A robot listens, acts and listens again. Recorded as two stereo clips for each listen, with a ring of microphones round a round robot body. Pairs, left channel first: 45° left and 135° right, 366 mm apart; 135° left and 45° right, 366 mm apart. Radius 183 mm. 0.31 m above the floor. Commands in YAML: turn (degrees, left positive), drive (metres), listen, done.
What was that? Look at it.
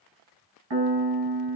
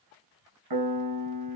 turn: -85
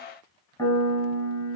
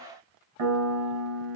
turn: -35
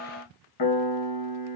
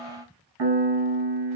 done: "Facing the piano, under 1 m away."